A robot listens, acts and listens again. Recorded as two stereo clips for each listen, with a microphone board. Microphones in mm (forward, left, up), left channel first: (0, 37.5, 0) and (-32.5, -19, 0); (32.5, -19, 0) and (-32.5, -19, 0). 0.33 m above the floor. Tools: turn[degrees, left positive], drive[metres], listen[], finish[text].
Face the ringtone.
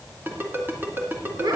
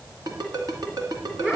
Thought: The ringtone: 175° right.
Action: turn[-175]
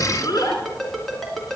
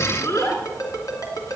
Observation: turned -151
Thought: The ringtone is now 25° right.
Action: turn[-25]
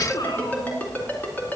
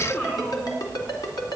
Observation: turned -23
Action: finish[Found it: a ringtone, straight ahead.]